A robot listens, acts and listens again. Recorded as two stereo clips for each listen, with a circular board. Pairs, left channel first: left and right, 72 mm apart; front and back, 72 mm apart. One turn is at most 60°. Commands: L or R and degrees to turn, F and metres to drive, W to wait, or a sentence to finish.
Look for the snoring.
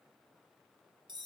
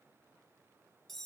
W
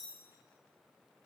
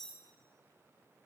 W
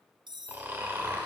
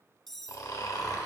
R30
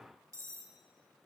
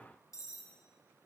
W
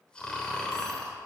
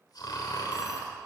L15
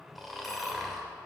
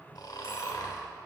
Found it: snoring, straight ahead, 1 to 2 m away.